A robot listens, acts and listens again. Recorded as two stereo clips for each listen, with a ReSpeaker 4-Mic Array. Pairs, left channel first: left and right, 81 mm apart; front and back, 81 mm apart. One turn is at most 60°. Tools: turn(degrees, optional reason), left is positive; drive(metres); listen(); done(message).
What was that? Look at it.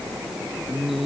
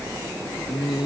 done("Found it: singing, straight ahead.")